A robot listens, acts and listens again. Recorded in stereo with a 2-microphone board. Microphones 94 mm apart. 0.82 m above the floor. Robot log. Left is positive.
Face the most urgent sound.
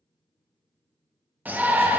note: The shout: about 15° right or 165° right.
cmd yaw -15
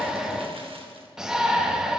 end: Found it: a shout, straight ahead.